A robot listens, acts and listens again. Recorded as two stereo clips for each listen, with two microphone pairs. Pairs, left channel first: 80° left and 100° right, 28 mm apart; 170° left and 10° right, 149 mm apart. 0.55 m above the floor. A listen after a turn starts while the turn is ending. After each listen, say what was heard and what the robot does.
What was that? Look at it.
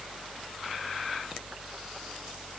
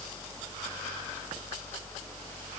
Keep listening.
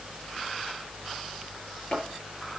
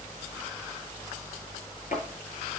Keep listening.
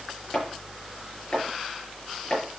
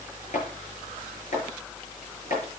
The chopping: 140° left. Turn 140° left.
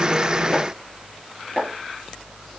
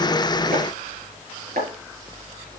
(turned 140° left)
Facing the chopping, over 4 m away.